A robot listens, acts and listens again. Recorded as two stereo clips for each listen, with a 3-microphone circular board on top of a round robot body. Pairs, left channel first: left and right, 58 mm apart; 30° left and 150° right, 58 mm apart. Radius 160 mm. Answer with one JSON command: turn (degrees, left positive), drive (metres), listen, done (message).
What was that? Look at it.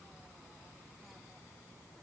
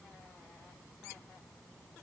{"listen": true}
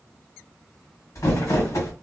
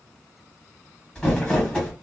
{"turn": 105}
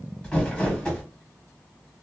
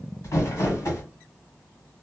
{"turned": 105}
{"turn": 15}
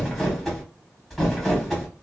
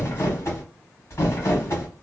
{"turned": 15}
{"done": "Found it: crumpling, straight ahead."}